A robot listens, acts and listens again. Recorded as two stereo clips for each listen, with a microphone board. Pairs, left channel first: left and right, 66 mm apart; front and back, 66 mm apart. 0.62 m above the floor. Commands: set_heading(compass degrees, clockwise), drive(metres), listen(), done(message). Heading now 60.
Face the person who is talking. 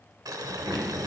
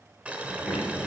done("Facing the child speaking.")